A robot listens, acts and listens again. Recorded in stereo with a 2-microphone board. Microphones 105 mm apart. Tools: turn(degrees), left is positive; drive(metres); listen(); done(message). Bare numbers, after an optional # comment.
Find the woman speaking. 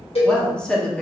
turn(30)
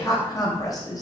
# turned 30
# So it is at 140° left.
turn(140)
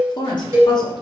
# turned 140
# The woman speaking is now 50° left.
turn(50)
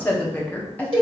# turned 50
# The woman speaking is now 15° left.
turn(15)
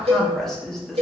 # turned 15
done("Found it: a woman speaking, straight ahead.")